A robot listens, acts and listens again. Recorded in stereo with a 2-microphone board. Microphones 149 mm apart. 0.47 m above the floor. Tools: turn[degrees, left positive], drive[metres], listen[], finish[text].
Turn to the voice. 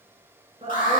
Thought: The woman speaking: about 40° right or 140° right.
Action: turn[-40]
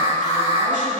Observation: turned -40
Action: listen[]
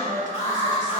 Thought: So it is at 90° right.
Action: turn[-90]
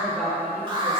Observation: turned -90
Action: finish[Found it: a woman speaking, straight ahead, 1 to 2 m away.]